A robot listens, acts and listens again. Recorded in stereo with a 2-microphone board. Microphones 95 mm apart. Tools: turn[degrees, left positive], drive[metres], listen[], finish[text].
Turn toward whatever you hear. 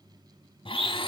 Thought: The blender: about 70° left or 110° left.
Action: turn[70]
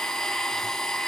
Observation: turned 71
Action: finish[Facing the blender, 1 to 2 m away.]